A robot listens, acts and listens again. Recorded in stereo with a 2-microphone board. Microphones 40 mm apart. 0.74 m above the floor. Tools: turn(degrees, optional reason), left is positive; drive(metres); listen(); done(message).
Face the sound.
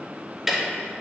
turn(degrees=-30)
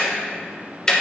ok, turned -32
turn(degrees=20, reason="So it is at 20° left.")
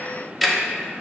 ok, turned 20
done("Facing the ticking.")